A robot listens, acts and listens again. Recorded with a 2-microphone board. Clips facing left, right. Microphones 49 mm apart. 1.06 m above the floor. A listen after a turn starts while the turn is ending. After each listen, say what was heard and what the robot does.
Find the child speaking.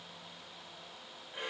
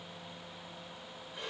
Keep listening.
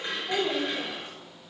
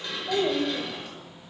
The child speaking: about 75° right or 105° right. Turn 75° right.
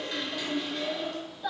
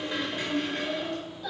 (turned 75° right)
So it is at 10° left. Turn 10° left.
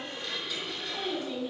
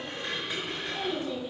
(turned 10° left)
Facing the child speaking, over 4 m away.